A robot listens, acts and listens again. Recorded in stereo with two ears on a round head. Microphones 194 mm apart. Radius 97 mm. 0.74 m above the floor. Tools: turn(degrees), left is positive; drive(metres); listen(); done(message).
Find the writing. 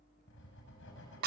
turn(degrees=55)
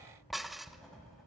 done("Found it: writing, straight ahead.")